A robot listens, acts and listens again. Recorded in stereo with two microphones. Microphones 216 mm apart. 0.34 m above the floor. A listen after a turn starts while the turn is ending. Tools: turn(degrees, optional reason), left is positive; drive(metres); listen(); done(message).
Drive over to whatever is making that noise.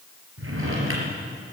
turn(degrees=-90)
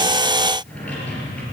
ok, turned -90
drive(metres=1.0)
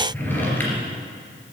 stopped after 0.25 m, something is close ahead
turn(degrees=10, reason="The drawer is now 10° left.")
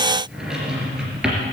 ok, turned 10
done("Something is in my way. I am facing the drawer but have not reached it.")